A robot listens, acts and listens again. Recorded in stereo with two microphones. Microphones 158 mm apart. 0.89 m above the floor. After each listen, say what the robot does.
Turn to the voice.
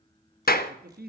Turn 65° right.
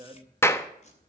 Turn 30° right.
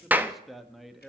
Found it: a man speaking, straight ahead.